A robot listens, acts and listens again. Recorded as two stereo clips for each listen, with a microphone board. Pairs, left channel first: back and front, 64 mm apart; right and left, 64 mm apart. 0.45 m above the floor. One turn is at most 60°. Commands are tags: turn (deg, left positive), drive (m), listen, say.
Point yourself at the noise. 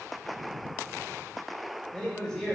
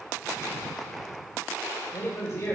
<turn deg="-60"/>
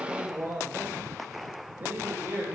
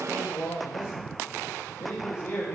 <turn deg="-55"/>
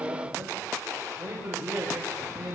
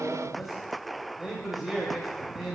<say>Found it: a man speaking, straight ahead, 2 to 4 m away.</say>